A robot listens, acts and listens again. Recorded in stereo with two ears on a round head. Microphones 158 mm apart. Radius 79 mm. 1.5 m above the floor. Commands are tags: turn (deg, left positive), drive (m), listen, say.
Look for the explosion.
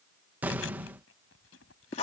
<turn deg="-30"/>
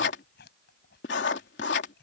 <listen/>
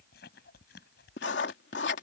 <say>I heard an explosion, but can't make it out now. It was about 20° left or 140° right.</say>